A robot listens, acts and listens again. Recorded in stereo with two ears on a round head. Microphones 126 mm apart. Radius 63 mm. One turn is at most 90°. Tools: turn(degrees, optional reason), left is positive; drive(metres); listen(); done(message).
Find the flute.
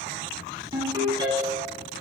listen()
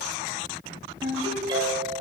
listen()
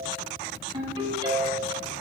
done("I can't make out a flute, only a ringtone.")